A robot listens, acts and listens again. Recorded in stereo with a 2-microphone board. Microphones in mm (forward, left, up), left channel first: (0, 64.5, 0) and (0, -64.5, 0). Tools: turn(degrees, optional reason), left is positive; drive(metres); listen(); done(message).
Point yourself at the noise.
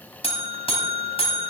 turn(degrees=50, reason="The buzzer: about 50° left or 130° left.")
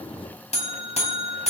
turn(degrees=70, reason="So it is at 70° left.")
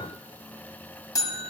turn(degrees=30, reason="The buzzer is now 30° left.")
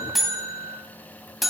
done("Facing the buzzer.")